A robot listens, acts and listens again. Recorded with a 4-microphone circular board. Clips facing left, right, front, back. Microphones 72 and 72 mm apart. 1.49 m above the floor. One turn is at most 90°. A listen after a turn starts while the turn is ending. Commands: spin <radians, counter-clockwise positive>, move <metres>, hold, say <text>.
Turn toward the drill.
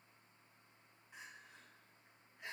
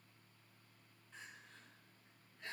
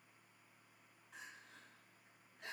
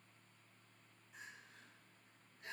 hold
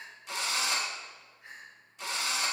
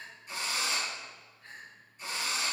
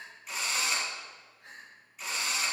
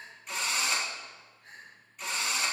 spin 1.57
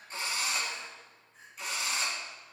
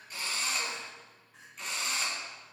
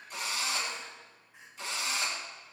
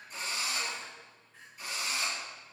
say Facing the drill, 1 to 2 m away.